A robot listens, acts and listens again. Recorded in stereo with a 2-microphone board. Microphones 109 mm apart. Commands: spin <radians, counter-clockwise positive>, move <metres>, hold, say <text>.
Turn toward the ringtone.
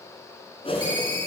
spin -0.79
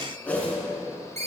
spin -1.66
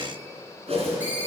spin -0.26
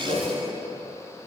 hold
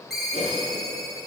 say Found it: a ringtone, straight ahead, 2 to 4 m away.